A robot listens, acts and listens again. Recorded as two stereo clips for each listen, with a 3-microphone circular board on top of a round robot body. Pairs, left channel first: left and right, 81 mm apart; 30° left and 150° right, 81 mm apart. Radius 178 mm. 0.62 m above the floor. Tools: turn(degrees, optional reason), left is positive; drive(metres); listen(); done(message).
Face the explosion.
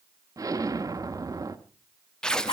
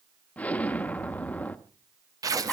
turn(degrees=-45, reason="The explosion: 45° right.")
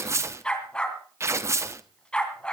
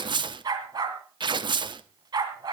done("Facing where the explosion came from. I can't hear it now.")